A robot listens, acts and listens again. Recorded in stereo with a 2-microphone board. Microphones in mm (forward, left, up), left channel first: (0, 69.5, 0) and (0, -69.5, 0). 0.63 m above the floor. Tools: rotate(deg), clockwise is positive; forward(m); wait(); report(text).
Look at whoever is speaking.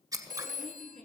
rotate(-30)
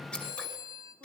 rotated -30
wait()
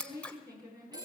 rotate(25)
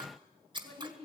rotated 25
rotate(-15)
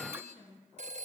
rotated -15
report("Facing the woman speaking, over 4 m away.")